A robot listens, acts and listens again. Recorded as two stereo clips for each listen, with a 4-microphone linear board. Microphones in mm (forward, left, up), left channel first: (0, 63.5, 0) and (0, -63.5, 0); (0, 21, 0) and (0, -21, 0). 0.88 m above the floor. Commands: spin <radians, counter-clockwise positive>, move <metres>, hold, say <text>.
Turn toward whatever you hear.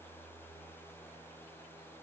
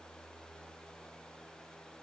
hold
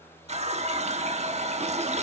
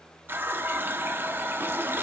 spin -1.05
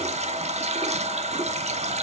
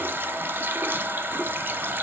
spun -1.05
spin -1.05
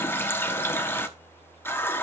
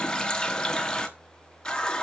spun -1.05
spin 0.26
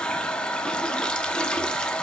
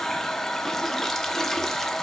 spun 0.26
say Facing the running tap, under 1 m away.